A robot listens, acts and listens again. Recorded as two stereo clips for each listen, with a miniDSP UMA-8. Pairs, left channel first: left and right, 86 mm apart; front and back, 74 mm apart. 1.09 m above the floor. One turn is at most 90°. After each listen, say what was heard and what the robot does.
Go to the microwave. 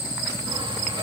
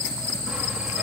Keep listening.
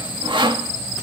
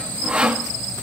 Keep listening.
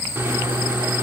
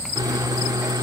The microwave: 150° right. Turn 90° right.
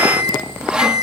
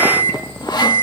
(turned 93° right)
The microwave is now 60° right. Turn 60° right.
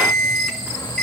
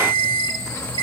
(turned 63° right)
Drive 1.0 m forward.
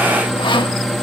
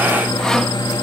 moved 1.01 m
Drive 1.0 m forward.
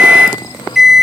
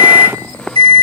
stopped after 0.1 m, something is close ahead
I am next to the microwave.